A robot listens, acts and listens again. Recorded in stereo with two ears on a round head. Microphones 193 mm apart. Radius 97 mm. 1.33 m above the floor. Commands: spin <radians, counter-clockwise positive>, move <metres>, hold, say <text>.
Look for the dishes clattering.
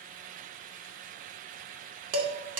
spin -1.57
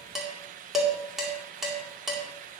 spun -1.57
say Facing the dishes clattering, 2 to 4 m away.